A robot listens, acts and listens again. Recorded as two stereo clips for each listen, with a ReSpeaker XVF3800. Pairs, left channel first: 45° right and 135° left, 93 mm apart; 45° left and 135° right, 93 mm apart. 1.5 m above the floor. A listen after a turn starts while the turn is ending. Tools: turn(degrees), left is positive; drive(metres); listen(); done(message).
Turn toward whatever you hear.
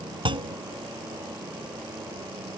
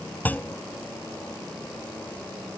turn(degrees=115)
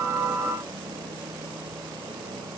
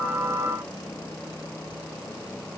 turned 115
done("I heard a clunk from this way, but can't make it out now.")